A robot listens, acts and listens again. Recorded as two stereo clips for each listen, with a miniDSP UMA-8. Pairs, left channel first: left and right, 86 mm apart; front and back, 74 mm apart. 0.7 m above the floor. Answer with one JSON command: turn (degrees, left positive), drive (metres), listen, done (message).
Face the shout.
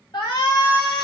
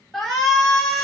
{"turn": 85}
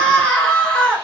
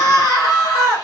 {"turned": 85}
{"turn": 10}
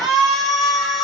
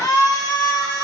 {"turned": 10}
{"done": "Facing the shout."}